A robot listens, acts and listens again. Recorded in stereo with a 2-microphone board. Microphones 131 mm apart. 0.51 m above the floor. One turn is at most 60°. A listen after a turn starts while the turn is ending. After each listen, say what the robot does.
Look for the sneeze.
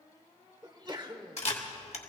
Turn 35° right.
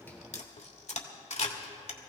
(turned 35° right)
Keep listening.
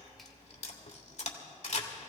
I heard a sneeze, but can't make it out now. It was about straight ahead or 110° right.